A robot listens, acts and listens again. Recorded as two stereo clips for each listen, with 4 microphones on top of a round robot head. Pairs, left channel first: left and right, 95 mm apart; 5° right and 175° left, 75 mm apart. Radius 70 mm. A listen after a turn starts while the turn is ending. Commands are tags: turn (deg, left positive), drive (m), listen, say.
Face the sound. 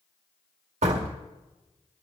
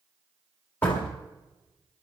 <turn deg="-80"/>
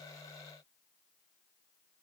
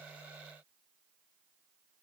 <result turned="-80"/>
<say>I heard a door slam from this way, but can't make it out now.</say>